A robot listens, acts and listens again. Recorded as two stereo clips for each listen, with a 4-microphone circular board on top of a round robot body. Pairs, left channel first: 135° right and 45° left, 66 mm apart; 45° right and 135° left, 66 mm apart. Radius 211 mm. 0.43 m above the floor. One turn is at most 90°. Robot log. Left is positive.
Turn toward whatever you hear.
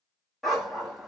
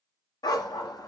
note: The dog barking: 40° right.
cmd yaw -40
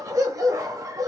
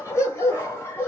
note: The dog barking is now 10° left.
cmd yaw +10
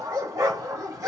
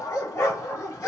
end: Found it: a dog barking, straight ahead.